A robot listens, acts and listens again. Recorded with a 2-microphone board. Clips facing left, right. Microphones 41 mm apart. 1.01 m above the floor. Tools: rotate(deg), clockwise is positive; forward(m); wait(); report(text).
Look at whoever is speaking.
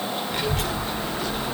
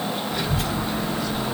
rotate(-70)
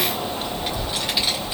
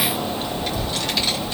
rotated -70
rotate(-10)
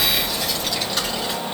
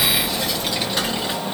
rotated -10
rotate(10)
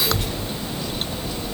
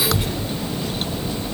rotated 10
rotate(10)
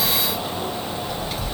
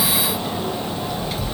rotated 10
report("Found it: a child speaking, straight ahead.")